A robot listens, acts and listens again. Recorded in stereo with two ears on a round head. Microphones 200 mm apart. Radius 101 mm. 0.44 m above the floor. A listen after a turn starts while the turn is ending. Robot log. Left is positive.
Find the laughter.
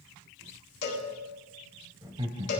note: The laughter: about 25° right or 155° right.
cmd yaw -25
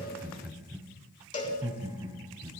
note: The laughter: about 20° right or 160° right.
cmd yaw -20
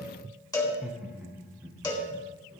cmd yaw -30
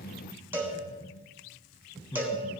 note: So it is at 20° left.
cmd yaw +20
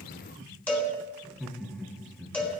end: Found it: laughter, straight ahead, 2 to 4 m away.